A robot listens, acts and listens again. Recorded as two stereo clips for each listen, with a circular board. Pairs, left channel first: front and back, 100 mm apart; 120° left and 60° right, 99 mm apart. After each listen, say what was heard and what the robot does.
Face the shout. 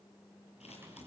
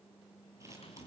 Keep listening.
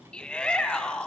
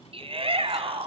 The shout: 80° right. Turn 80° right.
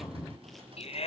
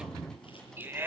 The shout is now 10° left. Turn 10° left.
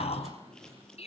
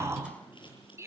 Facing the shout, over 4 m away.